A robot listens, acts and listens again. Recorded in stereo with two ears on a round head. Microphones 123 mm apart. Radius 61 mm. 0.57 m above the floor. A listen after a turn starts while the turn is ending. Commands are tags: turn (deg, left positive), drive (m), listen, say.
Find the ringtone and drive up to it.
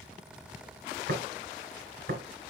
<listen/>
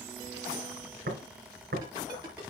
<turn deg="-30"/>
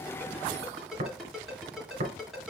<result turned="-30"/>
<drive m="1.0"/>
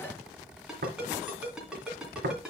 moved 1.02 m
<drive m="1.0"/>
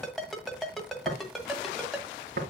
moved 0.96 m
<drive m="1.0"/>
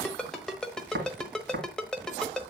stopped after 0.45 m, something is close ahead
<say>Arrived at the ringtone, straight ahead.</say>